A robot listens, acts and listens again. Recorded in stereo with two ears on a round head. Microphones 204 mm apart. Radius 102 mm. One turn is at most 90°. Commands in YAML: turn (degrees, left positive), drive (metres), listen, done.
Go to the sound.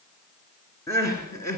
turn: 30
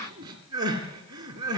turn: -15
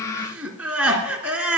drive: 1.0
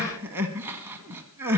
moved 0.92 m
turn: -10
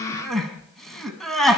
drive: 1.0
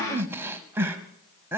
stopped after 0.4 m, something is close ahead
turn: -10
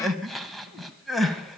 done: "Arrived at the crying, straight ahead."